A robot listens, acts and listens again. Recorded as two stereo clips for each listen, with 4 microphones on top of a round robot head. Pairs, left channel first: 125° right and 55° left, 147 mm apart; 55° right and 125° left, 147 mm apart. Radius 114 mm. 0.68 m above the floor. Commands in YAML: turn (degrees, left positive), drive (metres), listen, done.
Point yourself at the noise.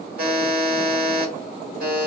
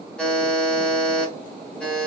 turn: 30
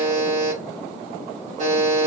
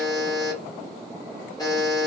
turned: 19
turn: 10
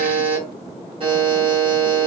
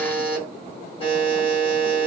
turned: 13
done: "Facing the buzzer."